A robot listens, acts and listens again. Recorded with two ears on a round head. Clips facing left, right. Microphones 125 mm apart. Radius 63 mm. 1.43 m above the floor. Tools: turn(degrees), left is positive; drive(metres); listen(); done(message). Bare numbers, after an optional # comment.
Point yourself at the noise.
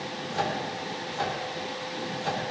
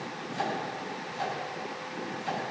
# The microwave: about 65° left or 115° left.
turn(65)
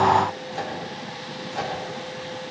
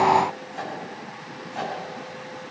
# So it is at 50° left.
turn(50)
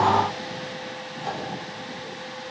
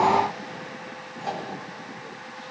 done("Found it: a microwave, straight ahead, over 4 m away.")